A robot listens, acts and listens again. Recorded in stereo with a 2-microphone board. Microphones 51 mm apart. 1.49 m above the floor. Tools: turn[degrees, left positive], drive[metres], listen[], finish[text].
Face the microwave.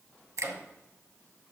Thought: The microwave: about 55° left or 125° left.
Action: turn[55]
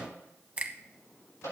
Thought: So it is at 70° left.
Action: turn[70]
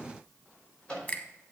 Thought: The microwave is now 15° left.
Action: turn[15]
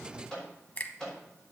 Thought: The microwave is now 10° left.
Action: turn[10]
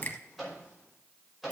Action: finish[Facing the microwave, over 4 m away.]